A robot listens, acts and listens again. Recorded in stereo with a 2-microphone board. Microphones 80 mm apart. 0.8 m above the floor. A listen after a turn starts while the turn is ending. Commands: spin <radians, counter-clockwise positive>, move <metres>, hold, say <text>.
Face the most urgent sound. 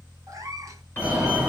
spin -0.35
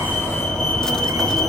say Found it: a fire alarm, straight ahead.